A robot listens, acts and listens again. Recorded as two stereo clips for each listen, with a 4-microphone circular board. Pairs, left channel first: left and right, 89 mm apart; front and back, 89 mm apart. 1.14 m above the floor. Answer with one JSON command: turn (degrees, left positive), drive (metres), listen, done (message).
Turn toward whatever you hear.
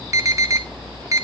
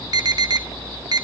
{"turn": -140}
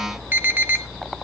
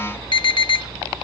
{"turn": -20}
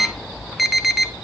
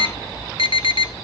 {"done": "Facing the alarm."}